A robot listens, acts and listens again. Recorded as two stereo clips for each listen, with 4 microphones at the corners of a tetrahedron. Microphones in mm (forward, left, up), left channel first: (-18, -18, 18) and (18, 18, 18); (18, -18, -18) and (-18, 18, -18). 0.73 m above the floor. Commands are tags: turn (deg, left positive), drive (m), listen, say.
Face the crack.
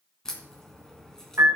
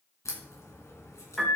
<turn deg="-60"/>
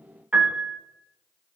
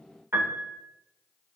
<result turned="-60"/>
<say>I heard a crack from this way, but can't make it out now.</say>